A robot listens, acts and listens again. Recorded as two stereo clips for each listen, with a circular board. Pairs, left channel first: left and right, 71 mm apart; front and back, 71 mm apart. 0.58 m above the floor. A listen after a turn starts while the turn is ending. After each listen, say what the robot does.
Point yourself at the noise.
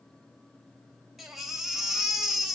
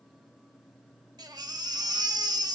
Turn 180° left.
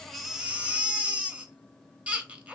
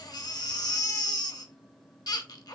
Turn 20° right.
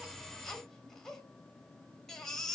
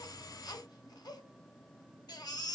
Found it: a baby crying, straight ahead.